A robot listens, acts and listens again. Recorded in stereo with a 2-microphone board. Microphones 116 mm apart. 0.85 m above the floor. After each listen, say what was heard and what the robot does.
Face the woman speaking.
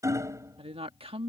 The woman speaking: about 60° right or 120° right. Turn 60° right.
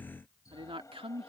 So it is at 60° right. Turn 60° right.
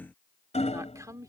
The woman speaking is now 30° right. Turn 30° right.
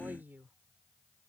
The woman speaking is now 20° right. Turn 20° right.
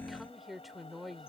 Facing the woman speaking.